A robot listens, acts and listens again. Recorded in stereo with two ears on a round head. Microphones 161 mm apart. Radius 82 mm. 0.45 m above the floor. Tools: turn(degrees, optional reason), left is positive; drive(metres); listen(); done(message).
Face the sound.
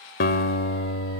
turn(degrees=60, reason="The guitar: about 60° left or 120° left.")
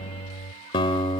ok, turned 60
turn(degrees=30, reason="So it is at 30° left.")
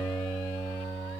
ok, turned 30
done("Facing the guitar, 1 to 2 m away.")